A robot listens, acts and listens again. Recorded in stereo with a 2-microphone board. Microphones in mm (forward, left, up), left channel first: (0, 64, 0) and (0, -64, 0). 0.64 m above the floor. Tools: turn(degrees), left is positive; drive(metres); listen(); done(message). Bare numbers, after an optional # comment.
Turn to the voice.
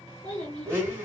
# The child speaking: about 65° left or 115° left.
turn(65)
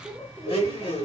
done("Found it: a child speaking, straight ahead, 2 to 4 m away.")